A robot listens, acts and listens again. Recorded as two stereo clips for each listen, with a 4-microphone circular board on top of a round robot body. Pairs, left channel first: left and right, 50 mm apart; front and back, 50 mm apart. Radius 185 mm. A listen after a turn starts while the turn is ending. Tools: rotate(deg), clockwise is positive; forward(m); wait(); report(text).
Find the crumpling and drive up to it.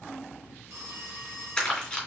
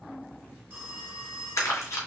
rotate(-20)
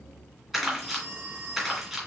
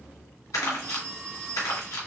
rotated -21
forward(1.0)
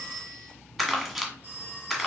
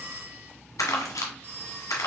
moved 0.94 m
forward(1.0)
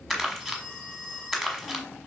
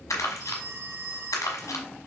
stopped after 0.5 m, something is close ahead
report("Arrived at the crumpling, straight ahead.")